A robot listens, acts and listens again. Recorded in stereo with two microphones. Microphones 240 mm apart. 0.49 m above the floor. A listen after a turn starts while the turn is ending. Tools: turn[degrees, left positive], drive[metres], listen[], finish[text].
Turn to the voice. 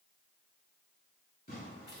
Action: listen[]
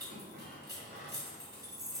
Action: listen[]
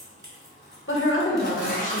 Thought: The woman speaking: about 55° left or 125° left.
Action: turn[55]
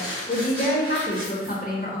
Thought: So it is at 45° left.
Action: turn[45]
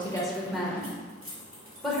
Action: finish[Found it: a woman speaking, straight ahead.]